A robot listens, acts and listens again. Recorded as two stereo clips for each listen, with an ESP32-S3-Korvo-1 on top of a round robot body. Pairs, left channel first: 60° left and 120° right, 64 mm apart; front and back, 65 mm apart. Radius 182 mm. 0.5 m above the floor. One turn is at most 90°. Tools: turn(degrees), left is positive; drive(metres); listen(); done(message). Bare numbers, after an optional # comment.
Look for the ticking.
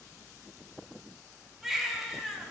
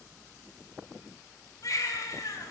listen()
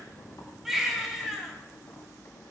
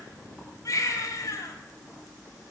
listen()
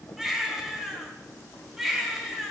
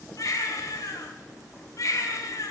done("I can't make out ticking to turn to.")